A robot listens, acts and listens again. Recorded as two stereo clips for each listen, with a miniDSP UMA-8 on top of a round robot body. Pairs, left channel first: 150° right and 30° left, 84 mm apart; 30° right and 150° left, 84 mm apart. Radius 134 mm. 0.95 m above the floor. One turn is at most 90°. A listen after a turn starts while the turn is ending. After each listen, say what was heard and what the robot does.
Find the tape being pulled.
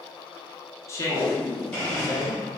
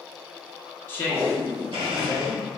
The tape being pulled: 145° right. Turn 90° right.
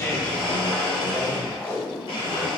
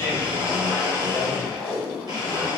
The tape being pulled is now 80° right. Turn 80° right.
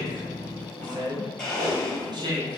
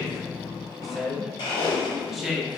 The tape being pulled is now 15° left. Turn 15° left.
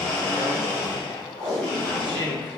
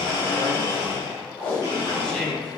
Found it: tape being pulled, straight ahead, 1 to 2 m away.